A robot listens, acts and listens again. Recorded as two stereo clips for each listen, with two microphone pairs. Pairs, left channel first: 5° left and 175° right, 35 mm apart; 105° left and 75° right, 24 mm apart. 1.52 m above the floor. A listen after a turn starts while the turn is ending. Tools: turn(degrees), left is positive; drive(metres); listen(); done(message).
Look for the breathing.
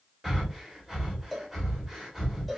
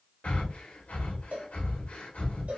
turn(degrees=105)
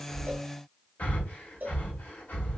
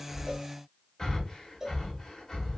turn(degrees=45)
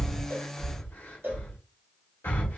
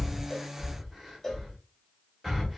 done("Facing the breathing.")